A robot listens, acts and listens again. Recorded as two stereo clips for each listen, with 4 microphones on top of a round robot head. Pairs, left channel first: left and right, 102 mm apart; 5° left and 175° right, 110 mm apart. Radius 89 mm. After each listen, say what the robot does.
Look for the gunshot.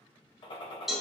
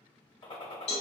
Turn 50° left.
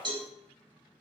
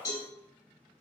Facing where the gunshot came from. I can't hear it now.